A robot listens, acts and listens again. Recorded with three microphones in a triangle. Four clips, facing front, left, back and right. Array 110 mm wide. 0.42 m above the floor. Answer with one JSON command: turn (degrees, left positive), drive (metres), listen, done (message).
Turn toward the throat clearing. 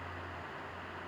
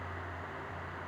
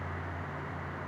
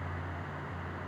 {"listen": true}
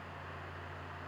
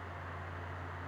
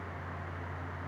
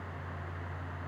{"listen": true}
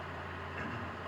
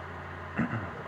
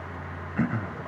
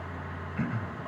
{"turn": 150}
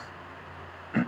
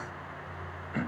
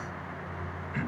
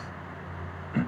{"done": "Facing the throat clearing, 1 to 2 m away."}